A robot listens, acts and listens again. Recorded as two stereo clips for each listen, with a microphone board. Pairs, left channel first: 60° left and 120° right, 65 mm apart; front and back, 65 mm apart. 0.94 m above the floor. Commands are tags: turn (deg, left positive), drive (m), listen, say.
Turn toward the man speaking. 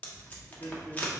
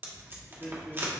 <turn deg="75"/>
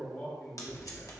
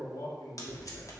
<say>Found it: a man speaking, straight ahead.</say>